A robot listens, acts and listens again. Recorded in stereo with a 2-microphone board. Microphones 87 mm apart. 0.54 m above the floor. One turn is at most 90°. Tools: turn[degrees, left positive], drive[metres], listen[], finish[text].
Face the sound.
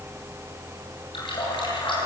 Thought: The running tap: about 75° left or 105° left.
Action: turn[75]
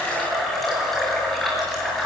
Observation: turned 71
Action: finish[Facing the running tap.]